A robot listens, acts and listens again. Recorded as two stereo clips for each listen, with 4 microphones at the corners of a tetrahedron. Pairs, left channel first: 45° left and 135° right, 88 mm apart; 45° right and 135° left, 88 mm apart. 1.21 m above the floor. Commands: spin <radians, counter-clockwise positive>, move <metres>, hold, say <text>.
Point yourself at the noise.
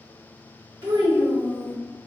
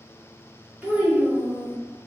spin -2.53
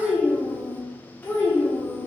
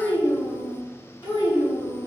spin -0.17
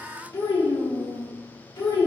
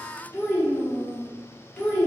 spin 0.35
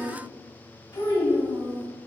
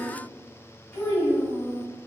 spin 0.17
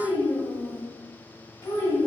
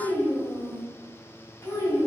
say Facing the child speaking.